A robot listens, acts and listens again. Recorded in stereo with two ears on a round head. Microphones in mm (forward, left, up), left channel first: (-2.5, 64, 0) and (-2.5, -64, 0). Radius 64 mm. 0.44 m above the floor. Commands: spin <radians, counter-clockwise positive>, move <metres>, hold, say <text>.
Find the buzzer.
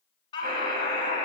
spin -0.96
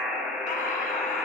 say Found it: a buzzer, straight ahead, 2 to 4 m away.